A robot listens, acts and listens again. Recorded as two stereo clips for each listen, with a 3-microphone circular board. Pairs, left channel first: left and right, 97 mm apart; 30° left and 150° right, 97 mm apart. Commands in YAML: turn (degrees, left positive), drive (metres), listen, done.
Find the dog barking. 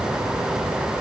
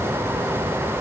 listen: true
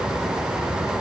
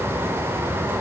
listen: true
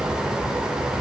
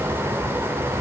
done: "I can't make out a dog barking."